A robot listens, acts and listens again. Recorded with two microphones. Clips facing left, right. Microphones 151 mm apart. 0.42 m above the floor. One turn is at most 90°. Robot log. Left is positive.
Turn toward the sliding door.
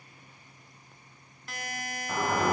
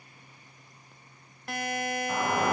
cmd yaw +30
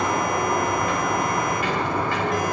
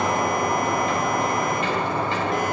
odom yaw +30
note: So it is at 30° right.
cmd yaw -30
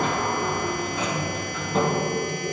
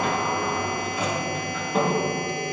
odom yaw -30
end: Facing the sliding door, 2 to 4 m away.